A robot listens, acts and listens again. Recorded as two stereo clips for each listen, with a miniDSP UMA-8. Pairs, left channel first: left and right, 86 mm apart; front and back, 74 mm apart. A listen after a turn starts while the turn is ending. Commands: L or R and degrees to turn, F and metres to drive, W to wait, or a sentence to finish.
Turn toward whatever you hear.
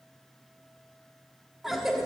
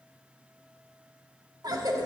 R175
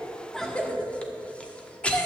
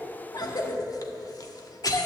L15
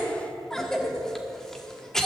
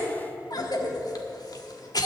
Found it: a cough, straight ahead, 1 to 2 m away.